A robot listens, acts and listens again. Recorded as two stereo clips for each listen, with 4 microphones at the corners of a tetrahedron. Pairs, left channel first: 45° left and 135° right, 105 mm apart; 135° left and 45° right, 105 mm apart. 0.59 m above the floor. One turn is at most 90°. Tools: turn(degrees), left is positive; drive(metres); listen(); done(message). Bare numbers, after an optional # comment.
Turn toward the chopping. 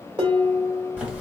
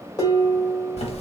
listen()
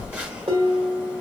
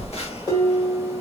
listen()
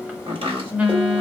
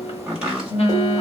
# The chopping: 125° right.
turn(-90)
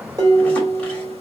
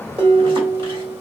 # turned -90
# Nothing new. It was at 35° right.
turn(-35)
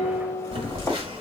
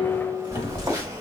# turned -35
listen()
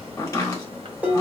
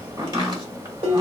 done("Facing where the chopping came from. I can't hear it now.")